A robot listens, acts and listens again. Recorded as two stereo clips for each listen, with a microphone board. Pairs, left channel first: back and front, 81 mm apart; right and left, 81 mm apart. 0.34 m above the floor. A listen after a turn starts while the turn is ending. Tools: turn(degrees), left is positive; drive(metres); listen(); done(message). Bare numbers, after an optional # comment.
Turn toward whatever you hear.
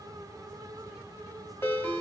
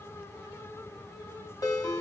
# The ringtone: 120° right.
turn(-120)
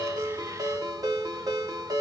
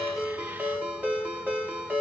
# The ringtone is now 20° left.
turn(20)
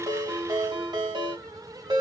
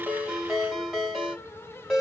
done("Facing the ringtone, under 1 m away.")